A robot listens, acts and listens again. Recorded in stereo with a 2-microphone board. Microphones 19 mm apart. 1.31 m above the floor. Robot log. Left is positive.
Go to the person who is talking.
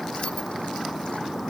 cmd idle
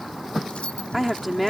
cmd yaw -30
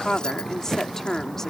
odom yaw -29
note: So it is at 20° left.
cmd yaw +20
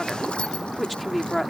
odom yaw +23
cmd fwd 1.0
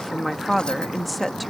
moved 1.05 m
cmd fwd 1.0
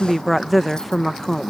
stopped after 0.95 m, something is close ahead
end: Arrived at the woman speaking, straight ahead.